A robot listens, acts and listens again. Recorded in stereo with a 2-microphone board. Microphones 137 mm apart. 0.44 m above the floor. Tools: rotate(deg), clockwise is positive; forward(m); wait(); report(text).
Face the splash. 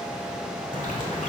rotate(-65)
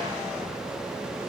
wait()
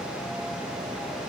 report("I heard a splash, but can't make it out now. It was about straight ahead or 50° left.")